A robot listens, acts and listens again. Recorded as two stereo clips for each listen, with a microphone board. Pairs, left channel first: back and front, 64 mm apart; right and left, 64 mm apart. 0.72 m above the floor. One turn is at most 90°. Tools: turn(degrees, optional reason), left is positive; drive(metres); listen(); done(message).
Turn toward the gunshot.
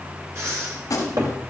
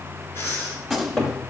turn(degrees=-90, reason="The gunshot: 175° right.")
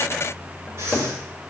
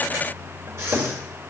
turn(degrees=-85, reason="Nothing new. It was at 85° right.")
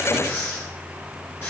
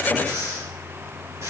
done("Facing where the gunshot came from. I can't hear it now.")